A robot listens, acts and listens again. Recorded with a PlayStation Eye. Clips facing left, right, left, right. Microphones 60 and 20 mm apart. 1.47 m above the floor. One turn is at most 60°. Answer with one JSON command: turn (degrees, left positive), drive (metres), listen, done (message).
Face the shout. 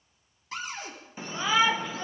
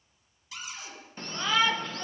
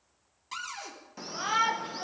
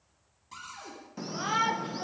{"turn": 30}
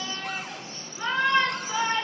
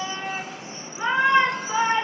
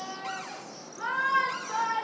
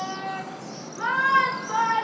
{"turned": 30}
{"turn": -20}
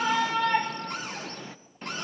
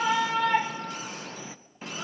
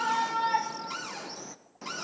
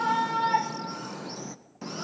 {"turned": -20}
{"done": "Facing the shout."}